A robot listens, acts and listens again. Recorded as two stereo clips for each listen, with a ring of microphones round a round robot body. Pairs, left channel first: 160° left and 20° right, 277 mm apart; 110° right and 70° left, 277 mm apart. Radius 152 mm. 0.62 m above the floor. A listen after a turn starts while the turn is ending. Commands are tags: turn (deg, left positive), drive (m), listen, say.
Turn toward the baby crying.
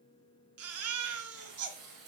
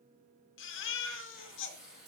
<turn deg="-65"/>
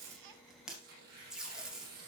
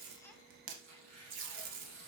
<listen/>
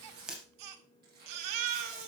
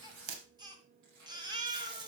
<turn deg="-10"/>
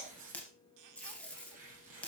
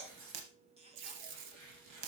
<listen/>
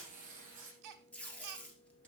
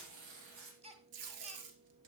<say>Found it: a baby crying, straight ahead, 1 to 2 m away.</say>